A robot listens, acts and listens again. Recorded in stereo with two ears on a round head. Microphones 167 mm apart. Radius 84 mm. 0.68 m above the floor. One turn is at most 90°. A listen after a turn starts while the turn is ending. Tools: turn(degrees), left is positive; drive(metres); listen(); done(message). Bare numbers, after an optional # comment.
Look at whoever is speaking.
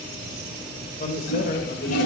# The man speaking: about 45° left or 135° left.
turn(45)
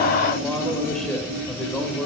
done("Found it: a man speaking, straight ahead, 2 to 4 m away.")